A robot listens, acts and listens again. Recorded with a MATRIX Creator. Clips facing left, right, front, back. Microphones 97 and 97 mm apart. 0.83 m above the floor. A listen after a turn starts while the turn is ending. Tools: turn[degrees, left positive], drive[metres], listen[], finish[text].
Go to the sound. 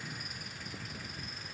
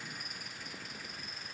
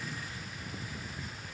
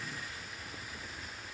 Action: listen[]
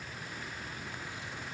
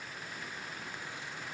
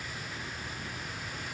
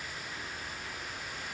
Action: listen[]
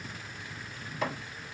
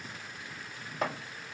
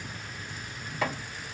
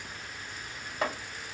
Thought: The chopping: 125° right.
Action: turn[-125]
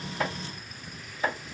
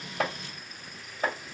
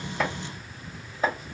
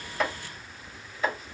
Thought: The chopping is now 45° right.
Action: turn[-45]
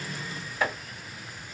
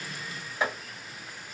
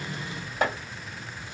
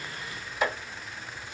Thought: The chopping is now 20° right.
Action: turn[-20]
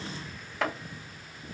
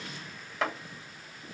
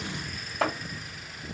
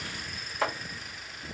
Action: drive[1.0]
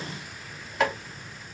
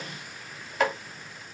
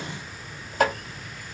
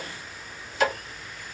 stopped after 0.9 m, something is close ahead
Action: finish[Arrived at the chopping, straight ahead.]